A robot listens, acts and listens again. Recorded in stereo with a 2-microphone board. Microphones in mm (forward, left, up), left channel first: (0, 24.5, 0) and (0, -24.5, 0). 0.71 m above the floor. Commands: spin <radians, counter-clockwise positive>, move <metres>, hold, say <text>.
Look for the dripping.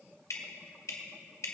spin 1.57
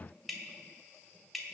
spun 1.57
say Found it: dripping, straight ahead, 1 to 2 m away.